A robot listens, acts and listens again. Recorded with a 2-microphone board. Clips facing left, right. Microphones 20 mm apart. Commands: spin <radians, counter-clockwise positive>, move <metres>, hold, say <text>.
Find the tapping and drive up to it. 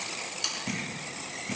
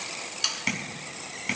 spin -1.13
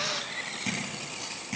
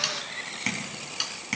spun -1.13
spin -0.79
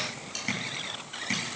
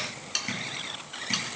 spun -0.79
move 1.0
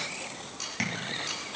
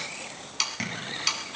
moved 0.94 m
move 1.0
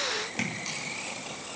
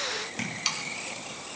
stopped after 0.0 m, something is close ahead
spin 0.17
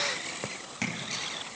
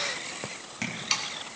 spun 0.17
say Blocked. The tapping is further on, straight ahead.